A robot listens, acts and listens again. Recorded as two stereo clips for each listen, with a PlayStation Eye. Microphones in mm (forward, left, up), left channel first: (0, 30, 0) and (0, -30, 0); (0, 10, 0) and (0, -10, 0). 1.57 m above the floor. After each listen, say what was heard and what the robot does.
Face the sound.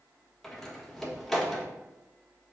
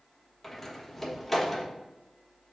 Turn 30° left.
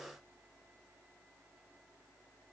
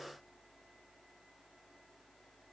Keep listening.
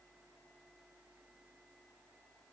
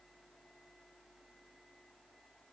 I heard a door slam, but can't make it out now. It was about 25° right or 145° left.